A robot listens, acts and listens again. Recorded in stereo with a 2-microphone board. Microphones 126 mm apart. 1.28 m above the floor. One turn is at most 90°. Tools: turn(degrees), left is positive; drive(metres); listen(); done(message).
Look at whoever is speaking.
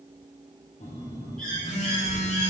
turn(degrees=-45)
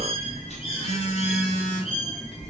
done("Facing the child speaking.")